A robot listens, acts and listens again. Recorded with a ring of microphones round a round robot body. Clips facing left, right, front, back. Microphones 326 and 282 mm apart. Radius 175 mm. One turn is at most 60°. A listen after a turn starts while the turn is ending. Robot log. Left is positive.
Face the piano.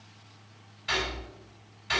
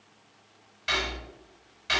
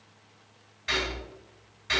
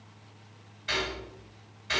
cmd idle
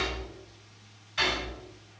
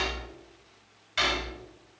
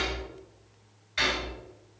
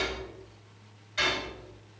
cmd idle
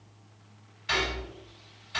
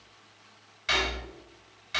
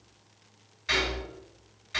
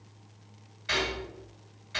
end: I can't make out a piano to turn to.